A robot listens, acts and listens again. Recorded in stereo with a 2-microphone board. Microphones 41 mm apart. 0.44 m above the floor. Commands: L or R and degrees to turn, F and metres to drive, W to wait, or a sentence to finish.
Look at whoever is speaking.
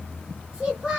R25
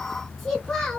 Found it: a child speaking, straight ahead.